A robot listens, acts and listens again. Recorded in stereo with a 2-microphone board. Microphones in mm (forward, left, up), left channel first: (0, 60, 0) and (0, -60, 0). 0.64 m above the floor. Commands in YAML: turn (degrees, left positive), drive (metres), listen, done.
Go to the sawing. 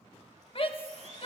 turn: -70
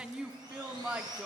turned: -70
turn: -35
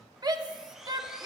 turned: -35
listen: true
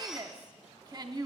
listen: true
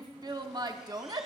done: "I heard sawing from this way, but can't make it out now. I did not reach it."